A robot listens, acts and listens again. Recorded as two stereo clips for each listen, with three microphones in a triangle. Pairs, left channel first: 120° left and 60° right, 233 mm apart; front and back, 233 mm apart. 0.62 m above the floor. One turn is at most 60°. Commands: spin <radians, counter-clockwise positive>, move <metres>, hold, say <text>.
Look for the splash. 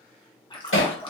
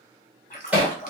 spin 0.96
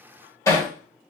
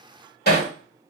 say I heard a splash from this way, but can't make it out now.